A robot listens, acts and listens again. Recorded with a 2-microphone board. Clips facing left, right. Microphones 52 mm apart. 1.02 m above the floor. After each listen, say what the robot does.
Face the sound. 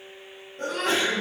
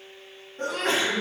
Turn 45° right.
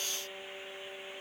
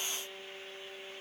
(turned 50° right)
Keep listening.
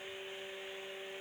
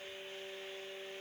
I heard a sneeze, but can't make it out now. It was about 5° left or 85° right.